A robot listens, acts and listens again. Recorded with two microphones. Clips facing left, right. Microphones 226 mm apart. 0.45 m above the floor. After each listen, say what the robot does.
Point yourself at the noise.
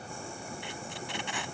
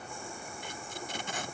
Turn 40° right.
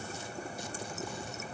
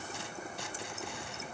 Keep listening.
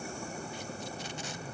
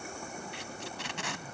Turn 100° right.
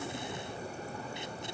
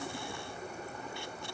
Keep listening.
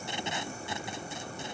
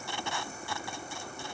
Turn 20° left.
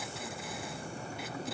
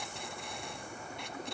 Keep listening.
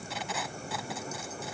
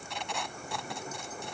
Found it: tape being pulled, straight ahead.